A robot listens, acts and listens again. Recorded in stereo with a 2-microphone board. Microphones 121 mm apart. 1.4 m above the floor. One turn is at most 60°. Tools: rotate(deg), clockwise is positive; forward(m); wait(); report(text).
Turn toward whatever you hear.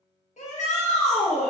rotate(-60)
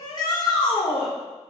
rotate(-40)
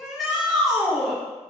report("Facing the shout, 1 to 2 m away.")